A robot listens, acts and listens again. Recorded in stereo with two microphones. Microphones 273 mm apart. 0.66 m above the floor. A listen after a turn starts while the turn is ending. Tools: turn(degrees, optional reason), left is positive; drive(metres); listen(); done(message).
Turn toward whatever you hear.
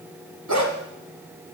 turn(degrees=-90)
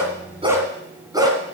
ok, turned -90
turn(degrees=-15, reason="So it is at 15° right.")
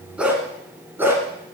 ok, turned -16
turn(degrees=-10, reason="The dog barking is now 10° right.")
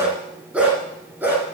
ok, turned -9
done("Found it: a dog barking, straight ahead, 2 to 4 m away.")